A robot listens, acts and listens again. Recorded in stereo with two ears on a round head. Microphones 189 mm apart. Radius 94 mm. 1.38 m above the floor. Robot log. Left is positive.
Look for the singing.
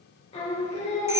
note: The singing: about 35° left or 145° left.
cmd yaw +35
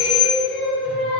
end: Found it: singing, straight ahead, 2 to 4 m away.